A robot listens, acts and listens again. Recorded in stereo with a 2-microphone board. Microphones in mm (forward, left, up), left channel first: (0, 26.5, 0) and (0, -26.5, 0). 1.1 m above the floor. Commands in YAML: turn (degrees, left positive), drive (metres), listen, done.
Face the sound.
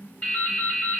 turn: 20
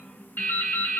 turn: 140
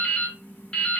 turn: 15
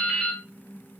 done: "Found it: dripping, straight ahead, under 1 m away."